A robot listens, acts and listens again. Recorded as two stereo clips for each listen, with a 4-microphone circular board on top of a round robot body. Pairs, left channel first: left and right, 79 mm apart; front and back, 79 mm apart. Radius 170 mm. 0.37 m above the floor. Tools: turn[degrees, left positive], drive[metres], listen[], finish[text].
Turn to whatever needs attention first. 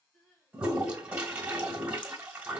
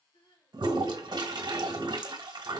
Thought: The crying: 10° left.
Action: turn[10]
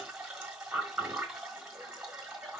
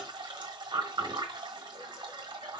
Action: listen[]
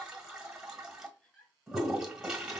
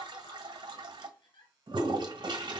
Action: finish[Facing the crying, 1 to 2 m away.]